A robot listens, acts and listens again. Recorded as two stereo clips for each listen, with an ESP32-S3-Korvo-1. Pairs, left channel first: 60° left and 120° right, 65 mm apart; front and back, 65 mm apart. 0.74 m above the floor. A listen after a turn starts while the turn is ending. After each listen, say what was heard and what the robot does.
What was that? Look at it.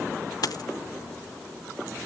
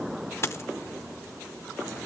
The dropped coin: 45° left. Turn 45° left.
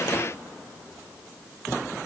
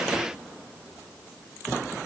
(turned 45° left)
Facing where the dropped coin came from. I can't hear it now.